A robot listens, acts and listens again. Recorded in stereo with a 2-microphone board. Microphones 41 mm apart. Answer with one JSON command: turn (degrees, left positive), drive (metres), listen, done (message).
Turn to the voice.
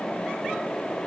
{"listen": true}
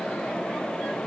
{"listen": true}
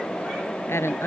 {"turn": 90}
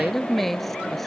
{"done": "Facing the woman speaking."}